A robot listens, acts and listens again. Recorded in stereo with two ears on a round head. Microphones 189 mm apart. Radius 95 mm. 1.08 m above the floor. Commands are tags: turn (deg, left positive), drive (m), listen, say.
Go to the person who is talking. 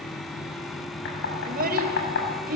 <turn deg="-45"/>
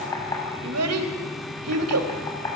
<turn deg="-90"/>
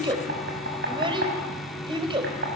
<turn deg="-25"/>
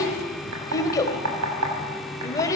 <turn deg="15"/>
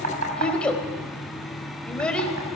<drive m="1.0"/>
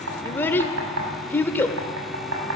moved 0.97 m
<turn deg="10"/>
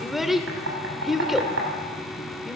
<drive m="1.0"/>
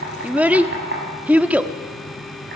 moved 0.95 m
<turn deg="-10"/>
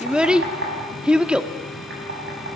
<drive m="1.0"/>
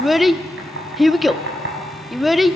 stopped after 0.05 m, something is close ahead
<say>I am next to the child speaking.</say>